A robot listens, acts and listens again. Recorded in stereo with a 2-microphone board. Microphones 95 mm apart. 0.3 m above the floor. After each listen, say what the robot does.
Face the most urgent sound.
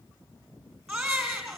Turn 30° right.
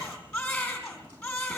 Turn 25° left.
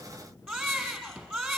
Found it: a baby crying, straight ahead, 2 to 4 m away.